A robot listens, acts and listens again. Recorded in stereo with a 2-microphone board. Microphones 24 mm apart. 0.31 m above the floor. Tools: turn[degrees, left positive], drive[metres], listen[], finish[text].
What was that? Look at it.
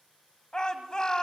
Thought: The shout: about 30° left or 150° left.
Action: turn[30]
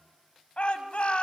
Thought: So it is at 110° left.
Action: turn[110]
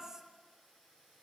Action: listen[]
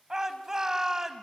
Thought: The shout is now 25° right.
Action: turn[-25]
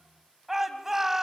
Thought: The shout is now 15° right.
Action: turn[-15]
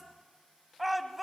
Action: finish[Facing the shout, 1 to 2 m away.]